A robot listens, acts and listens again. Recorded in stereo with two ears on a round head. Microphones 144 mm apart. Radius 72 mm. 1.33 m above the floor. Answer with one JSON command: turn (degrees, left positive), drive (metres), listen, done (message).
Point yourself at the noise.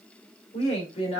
{"turn": 40}
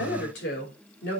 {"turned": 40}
{"turn": 105}
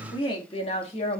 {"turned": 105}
{"turn": 40}
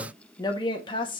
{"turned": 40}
{"turn": 30}
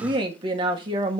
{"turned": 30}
{"turn": -30}
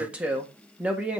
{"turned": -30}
{"turn": -10}
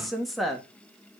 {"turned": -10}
{"done": "Facing the woman speaking, 1 to 2 m away."}